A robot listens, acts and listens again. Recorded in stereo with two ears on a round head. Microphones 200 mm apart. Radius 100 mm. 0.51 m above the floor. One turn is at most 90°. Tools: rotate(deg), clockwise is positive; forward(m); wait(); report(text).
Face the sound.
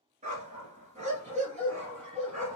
rotate(35)
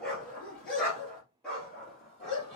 report("Found it: a dog barking, straight ahead, 2 to 4 m away.")